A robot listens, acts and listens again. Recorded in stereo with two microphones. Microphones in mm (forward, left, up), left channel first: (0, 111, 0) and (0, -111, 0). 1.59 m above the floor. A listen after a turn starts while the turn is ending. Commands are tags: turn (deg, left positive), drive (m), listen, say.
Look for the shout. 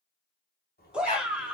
<turn deg="-30"/>
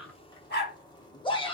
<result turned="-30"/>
<turn deg="25"/>
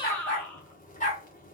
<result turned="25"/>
<say>Facing the shout.</say>